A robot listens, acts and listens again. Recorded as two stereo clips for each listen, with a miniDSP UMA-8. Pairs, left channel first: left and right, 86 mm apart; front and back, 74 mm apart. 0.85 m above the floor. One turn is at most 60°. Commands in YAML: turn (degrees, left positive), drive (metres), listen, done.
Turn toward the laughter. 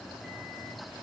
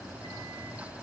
listen: true
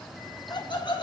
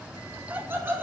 turn: 60
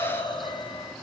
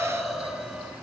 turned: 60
turn: 60
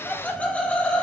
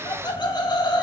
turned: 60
turn: 15
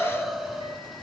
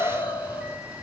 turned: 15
done: "Found it: laughter, straight ahead."